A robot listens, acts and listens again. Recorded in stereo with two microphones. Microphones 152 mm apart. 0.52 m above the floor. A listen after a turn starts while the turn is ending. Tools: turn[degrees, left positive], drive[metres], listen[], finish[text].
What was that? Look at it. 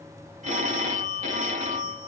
Thought: The phone ringing: about 50° right or 130° right.
Action: turn[-50]
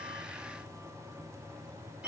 Thought: So it is at 10° right.
Action: turn[-10]
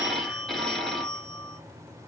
Action: finish[Facing the phone ringing.]